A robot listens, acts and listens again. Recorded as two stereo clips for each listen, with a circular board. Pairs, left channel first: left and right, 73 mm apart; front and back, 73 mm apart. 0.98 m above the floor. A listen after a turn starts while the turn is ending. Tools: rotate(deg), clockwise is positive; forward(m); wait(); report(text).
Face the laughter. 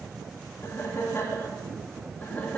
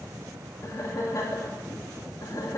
rotate(-25)
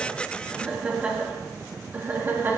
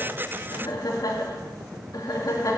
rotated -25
rotate(30)
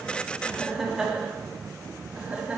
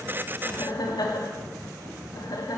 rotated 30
rotate(15)
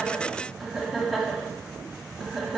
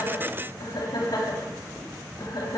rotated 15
report("Found it: laughter, straight ahead.")